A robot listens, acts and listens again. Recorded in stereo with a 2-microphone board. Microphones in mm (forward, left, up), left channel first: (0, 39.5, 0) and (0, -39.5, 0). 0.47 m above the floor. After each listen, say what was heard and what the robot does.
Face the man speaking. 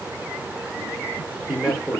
Turn 30° left.
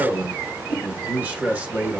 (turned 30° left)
So it is at 20° right. Turn 20° right.
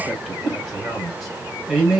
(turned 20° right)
Found it: a man speaking, straight ahead, 2 to 4 m away.